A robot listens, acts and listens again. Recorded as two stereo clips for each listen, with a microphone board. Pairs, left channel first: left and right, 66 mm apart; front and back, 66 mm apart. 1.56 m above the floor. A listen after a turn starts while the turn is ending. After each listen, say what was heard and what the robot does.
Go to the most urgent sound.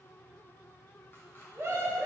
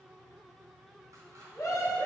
The scream: 35° right. Turn 35° right.
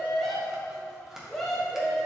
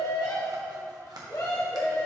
Drive 1.0 m forward.
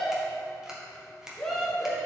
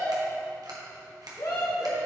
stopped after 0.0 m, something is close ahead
The scream is now 10° left. Turn 10° left.
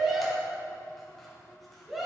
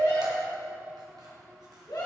Blocked. The scream is further on, straight ahead.